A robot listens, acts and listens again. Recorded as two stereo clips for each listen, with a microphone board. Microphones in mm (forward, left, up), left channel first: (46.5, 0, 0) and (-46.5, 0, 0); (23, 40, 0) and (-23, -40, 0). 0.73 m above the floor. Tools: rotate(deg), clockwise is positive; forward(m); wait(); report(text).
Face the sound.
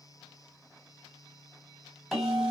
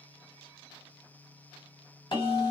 rotate(-95)
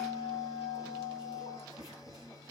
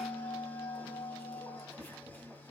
rotate(10)
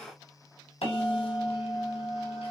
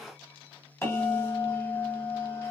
report("Facing the bell.")